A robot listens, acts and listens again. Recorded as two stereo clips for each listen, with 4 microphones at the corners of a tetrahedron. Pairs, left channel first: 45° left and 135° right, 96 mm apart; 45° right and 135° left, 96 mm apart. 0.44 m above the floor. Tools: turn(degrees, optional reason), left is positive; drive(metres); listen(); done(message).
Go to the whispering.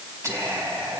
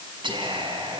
turn(degrees=165, reason="The whispering: 165° left.")
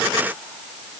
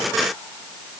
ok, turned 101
turn(degrees=65, reason="Nothing new. It was at 65° left.")
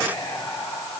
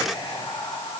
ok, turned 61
drive(metres=1.0)
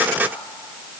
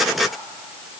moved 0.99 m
listen()
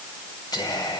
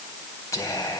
turn(degrees=10, reason="The whispering is now 10° left.")
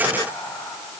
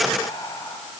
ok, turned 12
drive(metres=1.0)
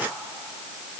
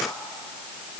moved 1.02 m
drive(metres=1.0)
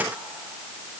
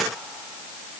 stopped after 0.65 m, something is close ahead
listen()
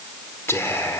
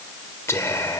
done("I am next to the whispering.")